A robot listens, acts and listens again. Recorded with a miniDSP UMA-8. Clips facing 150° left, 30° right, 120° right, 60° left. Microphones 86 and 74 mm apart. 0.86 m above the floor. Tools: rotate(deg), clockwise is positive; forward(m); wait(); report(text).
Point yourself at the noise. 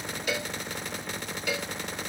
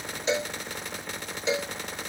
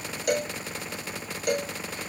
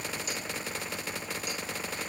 rotate(95)
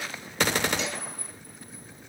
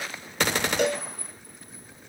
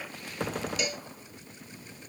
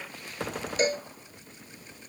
rotate(-10)
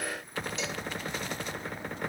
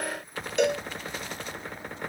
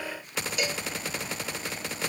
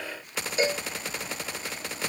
report("Facing the cowbell.")